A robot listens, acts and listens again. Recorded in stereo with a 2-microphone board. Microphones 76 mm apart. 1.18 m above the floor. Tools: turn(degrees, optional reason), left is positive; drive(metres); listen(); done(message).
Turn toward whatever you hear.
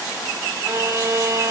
turn(degrees=-40, reason="The violin: about 40° right or 140° right.")
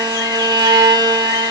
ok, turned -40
turn(degrees=-95, reason="So it is at 95° right.")
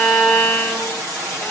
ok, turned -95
turn(degrees=10, reason="The violin is now 10° left.")
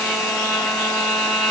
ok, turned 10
done("Found it: a violin, straight ahead.")